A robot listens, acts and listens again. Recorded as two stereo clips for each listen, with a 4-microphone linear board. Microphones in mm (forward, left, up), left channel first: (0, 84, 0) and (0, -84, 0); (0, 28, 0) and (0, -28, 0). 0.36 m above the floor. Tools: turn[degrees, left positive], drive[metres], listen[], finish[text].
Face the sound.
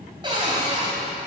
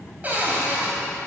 Thought: The cupboard door: about 30° right or 150° right.
Action: turn[-30]
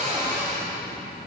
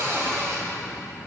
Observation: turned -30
Thought: So it is at 115° right.
Action: turn[-115]
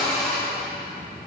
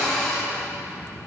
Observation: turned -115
Action: finish[Found it: a cupboard door, straight ahead, 2 to 4 m away.]